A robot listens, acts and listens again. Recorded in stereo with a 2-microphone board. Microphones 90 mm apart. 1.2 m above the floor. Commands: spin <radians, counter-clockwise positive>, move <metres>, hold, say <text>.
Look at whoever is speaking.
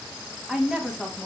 spin -0.52
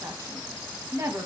spin -2.53
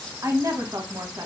spin -0.70
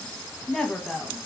spin 0.17
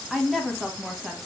say Found it: a woman speaking, straight ahead, 1 to 2 m away.